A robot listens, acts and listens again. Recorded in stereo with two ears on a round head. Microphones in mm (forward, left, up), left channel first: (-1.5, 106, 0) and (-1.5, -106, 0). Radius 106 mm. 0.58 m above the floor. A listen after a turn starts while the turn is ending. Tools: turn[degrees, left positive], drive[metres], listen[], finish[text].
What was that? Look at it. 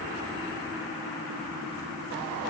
Action: listen[]
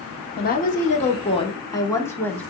Action: turn[30]
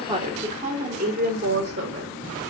Thought: So it is at 45° right.
Action: turn[-45]
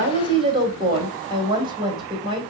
Thought: The woman speaking is now 20° right.
Action: turn[-20]
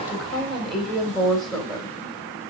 Action: finish[Facing the woman speaking, 2 to 4 m away.]